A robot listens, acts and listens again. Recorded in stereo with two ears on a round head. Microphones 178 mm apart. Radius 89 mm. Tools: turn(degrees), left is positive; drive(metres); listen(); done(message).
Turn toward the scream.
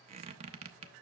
listen()
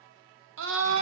turn(degrees=-70)
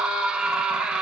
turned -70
done("Found it: a scream, straight ahead.")